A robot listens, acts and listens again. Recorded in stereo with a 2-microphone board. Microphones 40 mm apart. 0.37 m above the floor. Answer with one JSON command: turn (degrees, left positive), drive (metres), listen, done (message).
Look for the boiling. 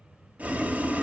{"turn": -40}
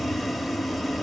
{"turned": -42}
{"done": "Facing the boiling."}